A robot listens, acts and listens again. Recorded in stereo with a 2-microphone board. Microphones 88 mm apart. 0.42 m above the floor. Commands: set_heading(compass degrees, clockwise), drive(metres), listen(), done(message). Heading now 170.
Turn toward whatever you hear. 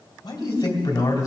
set_heading(130)
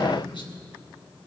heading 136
set_heading(21)
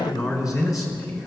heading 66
set_heading(26)
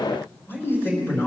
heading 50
set_heading(25)
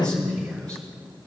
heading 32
set_heading(22)
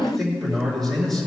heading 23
done("Found it: a man speaking, straight ahead.")